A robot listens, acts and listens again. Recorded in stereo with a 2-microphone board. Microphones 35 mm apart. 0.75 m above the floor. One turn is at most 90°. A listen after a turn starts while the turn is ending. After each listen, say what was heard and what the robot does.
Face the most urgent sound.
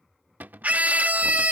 The scream: about 50° right or 130° right. Turn 50° right.
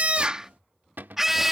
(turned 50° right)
So it is at 10° right. Turn 10° right.
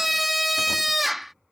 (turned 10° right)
Facing the scream.